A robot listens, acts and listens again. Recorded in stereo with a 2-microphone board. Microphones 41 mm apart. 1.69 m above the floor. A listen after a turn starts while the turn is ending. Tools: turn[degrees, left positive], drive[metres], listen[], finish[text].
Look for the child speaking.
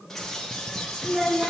Thought: The child speaking: about 30° right or 150° right.
Action: turn[-30]
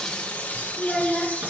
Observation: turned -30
Action: finish[Facing the child speaking, 2 to 4 m away.]